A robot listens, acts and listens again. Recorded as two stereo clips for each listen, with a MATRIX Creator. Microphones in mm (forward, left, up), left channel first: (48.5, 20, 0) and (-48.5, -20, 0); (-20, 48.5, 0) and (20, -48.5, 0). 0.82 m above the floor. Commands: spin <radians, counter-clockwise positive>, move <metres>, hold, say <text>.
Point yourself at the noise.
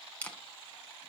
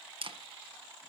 spin -0.87
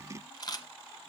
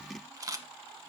spin -0.35
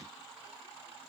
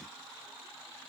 hold
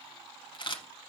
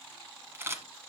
say Found it: a camera shutter, straight ahead.